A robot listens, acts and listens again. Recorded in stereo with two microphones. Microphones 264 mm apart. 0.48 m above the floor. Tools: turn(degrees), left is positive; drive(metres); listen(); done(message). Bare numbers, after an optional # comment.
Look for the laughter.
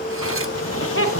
# The laughter: about 55° left or 125° left.
turn(55)
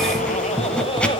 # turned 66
# So it is at 20° left.
turn(20)
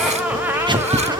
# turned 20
# The laughter is now 10° right.
turn(-10)
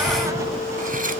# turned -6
listen()
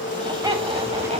# The laughter is now 20° right.
turn(-20)
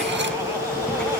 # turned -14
listen()
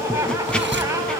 listen()
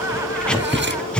done("Facing where the laughter came from. I can't hear it now.")